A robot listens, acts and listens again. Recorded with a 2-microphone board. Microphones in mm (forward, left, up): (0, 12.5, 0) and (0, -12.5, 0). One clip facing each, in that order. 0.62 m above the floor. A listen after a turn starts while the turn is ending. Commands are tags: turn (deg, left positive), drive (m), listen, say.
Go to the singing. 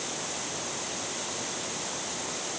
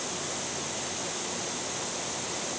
<listen/>
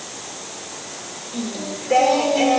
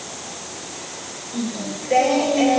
<turn deg="40"/>
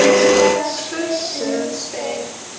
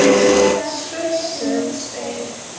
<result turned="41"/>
<turn deg="90"/>
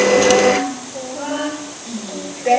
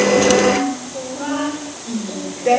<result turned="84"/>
<drive m="1.0"/>
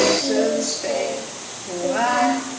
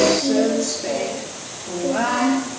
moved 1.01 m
<turn deg="10"/>
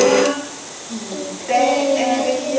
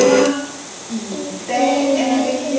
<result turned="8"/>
<drive m="1.0"/>
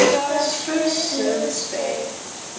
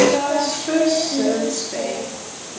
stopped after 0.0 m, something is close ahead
<say>I am next to the singing.</say>